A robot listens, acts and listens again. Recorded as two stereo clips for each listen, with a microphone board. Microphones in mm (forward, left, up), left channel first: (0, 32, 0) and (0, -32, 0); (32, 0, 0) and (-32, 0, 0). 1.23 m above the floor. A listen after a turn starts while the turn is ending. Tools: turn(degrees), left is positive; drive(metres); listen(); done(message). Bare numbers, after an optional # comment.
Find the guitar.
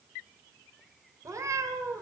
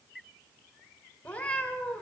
listen()
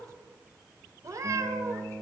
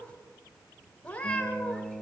# The guitar: 155° right.
turn(-155)
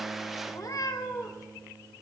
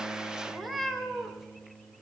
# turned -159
done("Found it: a guitar, straight ahead.")